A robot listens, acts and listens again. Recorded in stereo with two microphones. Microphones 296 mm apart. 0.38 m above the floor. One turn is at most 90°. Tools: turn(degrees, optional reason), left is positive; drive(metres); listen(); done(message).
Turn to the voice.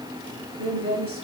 turn(degrees=-45, reason="The woman speaking: about 45° right or 135° right.")
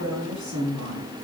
turn(degrees=-70, reason="So it is at 70° right.")
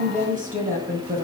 turn(degrees=-30, reason="The woman speaking is now 30° right.")
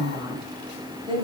turn(degrees=-20, reason="The woman speaking is now 20° right.")
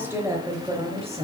turn(degrees=-20, reason="The woman speaking is now 20° right.")
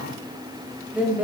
done("Found it: a woman speaking, straight ahead, 1 to 2 m away.")